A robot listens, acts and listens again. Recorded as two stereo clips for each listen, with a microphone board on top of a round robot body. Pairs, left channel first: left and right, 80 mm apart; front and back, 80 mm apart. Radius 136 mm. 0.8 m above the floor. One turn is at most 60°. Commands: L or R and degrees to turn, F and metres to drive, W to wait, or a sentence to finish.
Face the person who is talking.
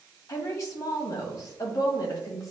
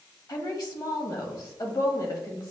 L40
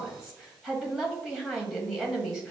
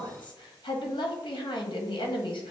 R10
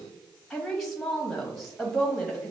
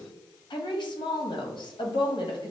Facing the woman speaking.